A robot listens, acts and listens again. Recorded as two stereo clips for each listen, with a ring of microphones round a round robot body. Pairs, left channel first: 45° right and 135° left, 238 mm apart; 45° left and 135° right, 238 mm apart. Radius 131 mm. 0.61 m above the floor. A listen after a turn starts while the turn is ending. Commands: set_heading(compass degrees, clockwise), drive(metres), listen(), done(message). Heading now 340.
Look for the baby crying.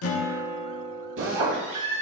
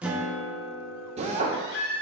set_heading(265)
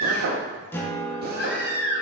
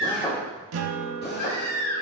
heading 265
done("Found it: a baby crying, straight ahead.")